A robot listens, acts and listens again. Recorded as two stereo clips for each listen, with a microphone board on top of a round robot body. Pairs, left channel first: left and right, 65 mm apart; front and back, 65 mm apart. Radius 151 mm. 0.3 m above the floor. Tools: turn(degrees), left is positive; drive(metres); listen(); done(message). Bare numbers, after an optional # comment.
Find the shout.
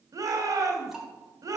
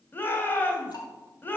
# The shout: 60° right.
turn(-60)
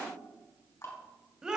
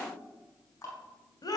# The shout is now 10° right.
turn(-10)
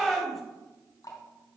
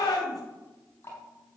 done("Found it: a shout, straight ahead, 2 to 4 m away.")